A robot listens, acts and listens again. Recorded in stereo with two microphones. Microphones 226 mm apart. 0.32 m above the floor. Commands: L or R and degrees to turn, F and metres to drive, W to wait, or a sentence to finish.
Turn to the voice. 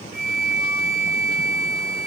W
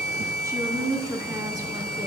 R30
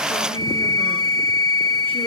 W
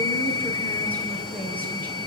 Facing the woman speaking, over 4 m away.